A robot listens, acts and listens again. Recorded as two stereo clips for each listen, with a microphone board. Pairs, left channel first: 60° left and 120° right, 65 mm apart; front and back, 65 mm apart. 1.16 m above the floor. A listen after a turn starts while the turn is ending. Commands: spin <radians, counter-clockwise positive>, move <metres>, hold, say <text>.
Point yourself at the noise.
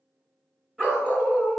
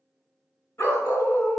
spin -0.96
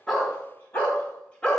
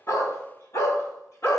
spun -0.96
spin -0.17
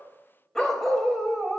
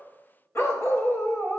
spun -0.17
spin -0.79
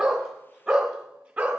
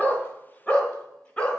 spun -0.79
spin -1.05
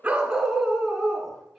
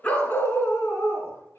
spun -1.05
spin -0.52
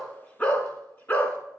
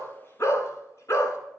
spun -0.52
spin 0.17
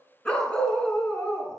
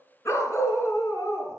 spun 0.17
say Found it: a dog barking, straight ahead.